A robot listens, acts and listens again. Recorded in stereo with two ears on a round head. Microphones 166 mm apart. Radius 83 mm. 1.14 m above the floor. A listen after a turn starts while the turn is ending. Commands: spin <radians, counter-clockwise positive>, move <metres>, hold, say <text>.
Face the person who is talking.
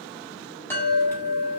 hold
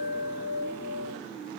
hold
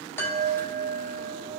say I can't make out anyone speaking to turn to.